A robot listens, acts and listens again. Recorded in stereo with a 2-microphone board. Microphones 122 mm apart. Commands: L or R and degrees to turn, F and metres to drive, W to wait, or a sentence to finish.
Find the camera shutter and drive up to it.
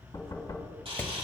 R50
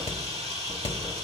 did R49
R75
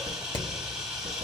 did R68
F1.0
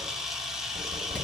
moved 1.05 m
F1.0
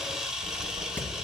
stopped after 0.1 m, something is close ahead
R10
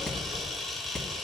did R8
I am next to the camera shutter.